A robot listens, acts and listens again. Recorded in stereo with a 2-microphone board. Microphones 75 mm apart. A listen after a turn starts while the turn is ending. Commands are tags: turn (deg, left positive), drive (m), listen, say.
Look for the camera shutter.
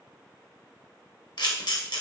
<turn deg="70"/>
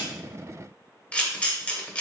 <turn deg="20"/>
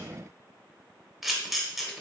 <say>Facing the camera shutter, under 1 m away.</say>